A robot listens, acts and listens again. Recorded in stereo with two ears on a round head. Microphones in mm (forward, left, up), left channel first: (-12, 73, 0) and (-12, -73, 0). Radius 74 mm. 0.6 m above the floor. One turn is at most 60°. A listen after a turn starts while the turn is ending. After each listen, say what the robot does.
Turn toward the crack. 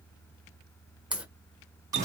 Turn 30° right.
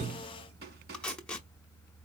Keep listening.
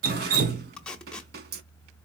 I heard a crack, but can't make it out now. It was about 20° left or 140° right.